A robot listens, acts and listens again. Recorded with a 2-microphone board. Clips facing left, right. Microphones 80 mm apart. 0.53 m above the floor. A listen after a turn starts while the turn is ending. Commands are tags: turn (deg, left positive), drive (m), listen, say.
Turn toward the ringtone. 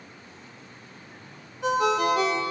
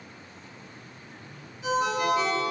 <turn deg="65"/>
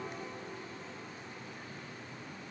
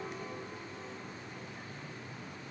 <listen/>
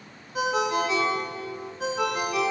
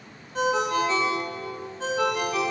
<turn deg="10"/>
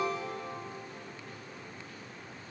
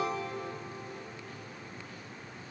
<listen/>
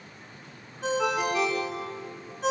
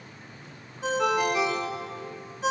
<say>Facing the ringtone, under 1 m away.</say>